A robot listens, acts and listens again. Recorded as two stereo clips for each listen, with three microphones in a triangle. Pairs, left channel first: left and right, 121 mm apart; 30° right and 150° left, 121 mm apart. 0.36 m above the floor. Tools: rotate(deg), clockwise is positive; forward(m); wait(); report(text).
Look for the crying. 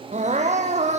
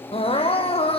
rotate(70)
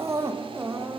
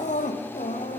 rotate(20)
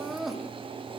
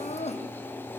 report("Facing the crying, 2 to 4 m away.")